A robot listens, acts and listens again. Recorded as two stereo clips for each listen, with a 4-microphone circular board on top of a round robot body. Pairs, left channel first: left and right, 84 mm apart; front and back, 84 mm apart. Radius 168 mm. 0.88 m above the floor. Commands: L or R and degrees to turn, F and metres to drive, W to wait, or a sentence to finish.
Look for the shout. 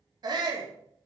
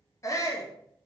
R50
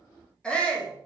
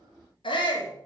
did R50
L10
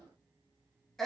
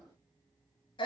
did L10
Facing the shout.